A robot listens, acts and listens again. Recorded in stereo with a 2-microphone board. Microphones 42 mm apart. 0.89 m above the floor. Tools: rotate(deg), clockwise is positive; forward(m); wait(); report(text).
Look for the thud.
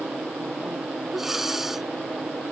wait()
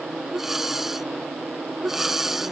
wait()
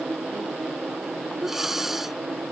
report("I can't make out a thud to turn to.")